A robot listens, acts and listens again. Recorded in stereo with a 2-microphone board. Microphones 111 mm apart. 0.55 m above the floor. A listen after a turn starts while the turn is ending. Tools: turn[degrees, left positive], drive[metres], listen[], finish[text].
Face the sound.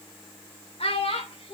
Thought: The child speaking: about 60° left or 120° left.
Action: turn[60]
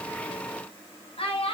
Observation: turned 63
Thought: So it is at 60° left.
Action: turn[60]
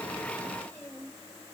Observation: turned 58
Thought: The child speaking is now 15° left.
Action: turn[15]
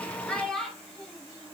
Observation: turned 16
Thought: The child speaking is now 10° left.
Action: turn[10]
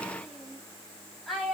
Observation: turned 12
Action: finish[Found it: a child speaking, straight ahead.]